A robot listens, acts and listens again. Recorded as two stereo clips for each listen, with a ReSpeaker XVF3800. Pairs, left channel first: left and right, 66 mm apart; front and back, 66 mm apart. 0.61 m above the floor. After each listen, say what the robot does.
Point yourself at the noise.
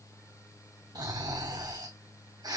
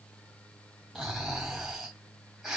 Turn 95° right.
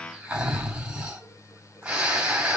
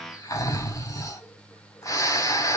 Turn 20° right.
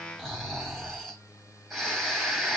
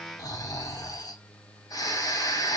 Found it: snoring, straight ahead.